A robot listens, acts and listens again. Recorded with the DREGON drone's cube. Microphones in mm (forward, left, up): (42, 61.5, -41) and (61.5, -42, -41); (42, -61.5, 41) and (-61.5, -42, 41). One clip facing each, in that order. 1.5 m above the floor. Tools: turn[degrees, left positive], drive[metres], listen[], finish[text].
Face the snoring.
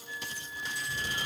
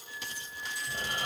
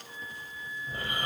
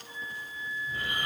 Thought: The snoring: 65° right.
Action: turn[-65]
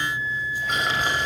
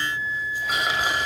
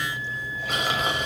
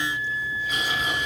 Action: finish[Facing the snoring.]